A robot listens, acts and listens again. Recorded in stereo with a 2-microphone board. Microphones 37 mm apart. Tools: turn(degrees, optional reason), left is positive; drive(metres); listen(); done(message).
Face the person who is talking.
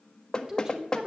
turn(degrees=-25, reason="The woman speaking: about 25° right or 155° right.")
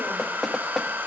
listen()
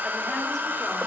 listen()
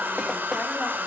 done("I heard a woman speaking, but can't make it out now. It was about straight ahead or 130° right.")